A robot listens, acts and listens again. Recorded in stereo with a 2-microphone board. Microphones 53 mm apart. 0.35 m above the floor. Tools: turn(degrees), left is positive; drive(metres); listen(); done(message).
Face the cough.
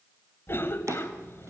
turn(degrees=45)
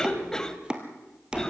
turn(degrees=15)
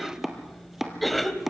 done("Found it: a cough, straight ahead, 1 to 2 m away.")